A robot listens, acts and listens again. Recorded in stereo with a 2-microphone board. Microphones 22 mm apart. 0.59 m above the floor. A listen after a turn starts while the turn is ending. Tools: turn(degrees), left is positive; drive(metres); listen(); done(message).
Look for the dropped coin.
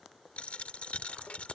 turn(degrees=65)
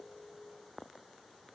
listen()
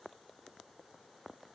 done("I heard a dropped coin, but can't make it out now. It was about straight ahead or 50° left.")